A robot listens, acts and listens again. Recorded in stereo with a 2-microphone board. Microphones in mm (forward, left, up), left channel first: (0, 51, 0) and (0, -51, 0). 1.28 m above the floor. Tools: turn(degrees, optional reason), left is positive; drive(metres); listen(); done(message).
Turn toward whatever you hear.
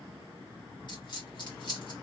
turn(degrees=50, reason="The dropped coin: about 50° left or 130° left.")
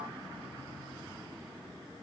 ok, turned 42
listen()
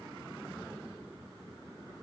done("I heard a dropped coin, but can't make it out now. It was about 5° left or 90° left.")